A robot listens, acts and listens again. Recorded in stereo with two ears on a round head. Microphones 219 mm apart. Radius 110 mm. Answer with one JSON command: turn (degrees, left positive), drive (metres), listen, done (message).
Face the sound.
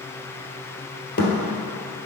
{"turn": 40}
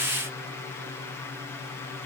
{"listen": true}
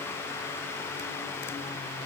{"done": "I heard a thud, but can't make it out now. It was about straight ahead or 100° left."}